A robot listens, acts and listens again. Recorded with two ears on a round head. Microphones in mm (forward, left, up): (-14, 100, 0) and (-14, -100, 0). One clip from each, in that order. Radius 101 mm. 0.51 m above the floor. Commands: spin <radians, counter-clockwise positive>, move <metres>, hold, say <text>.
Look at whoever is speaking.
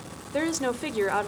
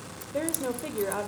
spin 1.05
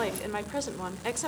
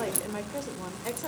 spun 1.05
spin 0.79
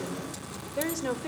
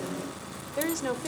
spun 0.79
say Facing the woman speaking.